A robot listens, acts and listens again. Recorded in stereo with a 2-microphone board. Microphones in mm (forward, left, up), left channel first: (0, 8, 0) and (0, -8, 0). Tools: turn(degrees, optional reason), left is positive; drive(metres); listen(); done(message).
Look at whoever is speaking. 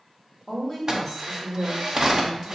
turn(degrees=30)
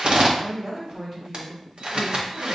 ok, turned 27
turn(degrees=-20, reason="So it is at 20° right.")
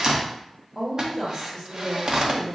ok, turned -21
done("Found it: a woman speaking, straight ahead, 1 to 2 m away.")